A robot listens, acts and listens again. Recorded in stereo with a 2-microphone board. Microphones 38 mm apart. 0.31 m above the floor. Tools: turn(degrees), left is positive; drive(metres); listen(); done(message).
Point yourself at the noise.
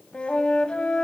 turn(degrees=30)
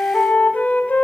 turn(degrees=115)
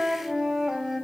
turn(degrees=-10)
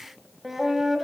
turn(degrees=-10)
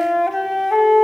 done("Facing the flute, under 1 m away.")